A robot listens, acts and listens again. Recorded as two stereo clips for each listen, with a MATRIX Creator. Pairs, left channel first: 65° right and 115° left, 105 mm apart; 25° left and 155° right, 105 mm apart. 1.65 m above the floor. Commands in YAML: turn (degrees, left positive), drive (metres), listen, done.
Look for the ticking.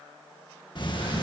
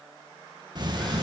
turn: -110
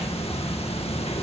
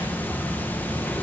turn: -50
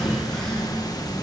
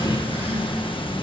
turn: -15
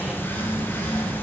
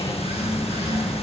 done: "Found it: ticking, straight ahead, 1 to 2 m away."